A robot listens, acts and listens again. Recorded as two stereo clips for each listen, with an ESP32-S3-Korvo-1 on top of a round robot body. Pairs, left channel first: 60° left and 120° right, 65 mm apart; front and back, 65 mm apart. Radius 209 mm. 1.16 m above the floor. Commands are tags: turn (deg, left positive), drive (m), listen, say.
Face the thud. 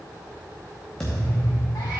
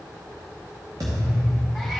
<turn deg="145"/>
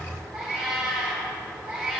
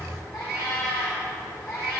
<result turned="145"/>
<say>I heard a thud from this way, but can't make it out now.</say>